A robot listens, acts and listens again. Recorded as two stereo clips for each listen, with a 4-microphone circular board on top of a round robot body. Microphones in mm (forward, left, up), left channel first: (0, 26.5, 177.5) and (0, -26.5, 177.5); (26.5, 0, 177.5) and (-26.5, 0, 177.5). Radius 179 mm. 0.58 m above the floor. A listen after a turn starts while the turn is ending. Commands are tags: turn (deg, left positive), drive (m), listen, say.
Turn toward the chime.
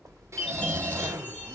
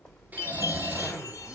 <turn deg="20"/>
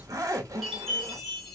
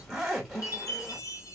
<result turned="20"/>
<say>Found it: a chime, straight ahead, 1 to 2 m away.</say>